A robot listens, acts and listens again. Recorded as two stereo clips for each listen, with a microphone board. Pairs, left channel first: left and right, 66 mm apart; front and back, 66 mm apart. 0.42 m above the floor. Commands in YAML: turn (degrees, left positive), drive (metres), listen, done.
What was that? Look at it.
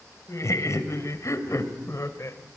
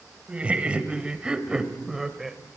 turn: 95
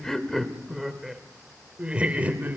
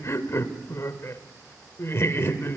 turn: -35
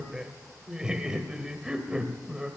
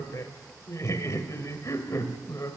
turn: -15
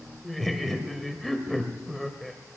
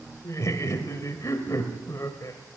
done: "Found it: laughter, straight ahead, 1 to 2 m away."